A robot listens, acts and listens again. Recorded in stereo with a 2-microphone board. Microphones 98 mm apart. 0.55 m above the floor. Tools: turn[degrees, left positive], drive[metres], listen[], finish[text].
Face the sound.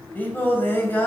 Thought: The singing: about 20° left or 160° left.
Action: turn[20]
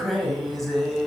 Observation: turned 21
Action: turn[30]
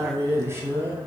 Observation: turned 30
Thought: So it is at 25° right.
Action: turn[-25]
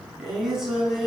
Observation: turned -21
Action: finish[Found it: singing, straight ahead, over 4 m away.]